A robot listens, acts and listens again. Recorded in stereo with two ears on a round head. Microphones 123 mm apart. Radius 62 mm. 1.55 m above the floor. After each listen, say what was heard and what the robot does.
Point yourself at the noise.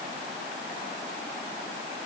Keep listening.
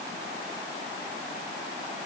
Keep listening.
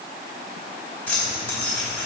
Turn 30° left.
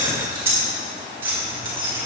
So it is at 15° right. Turn 15° right.
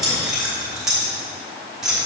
Facing the keys jangling, 2 to 4 m away.